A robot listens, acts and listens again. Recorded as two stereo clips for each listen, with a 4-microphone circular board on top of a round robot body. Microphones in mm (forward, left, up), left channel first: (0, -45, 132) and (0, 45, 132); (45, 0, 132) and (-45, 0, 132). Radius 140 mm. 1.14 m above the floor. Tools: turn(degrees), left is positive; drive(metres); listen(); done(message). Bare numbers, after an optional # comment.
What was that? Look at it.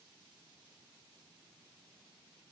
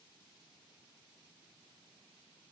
listen()
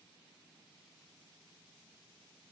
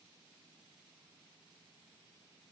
listen()
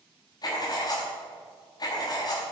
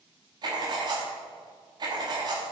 # The writing: 135° right.
turn(-135)
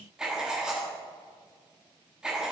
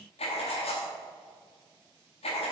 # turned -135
# The writing is now 10° left.
turn(10)
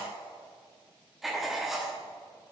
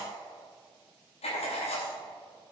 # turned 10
done("Facing the writing, 1 to 2 m away.")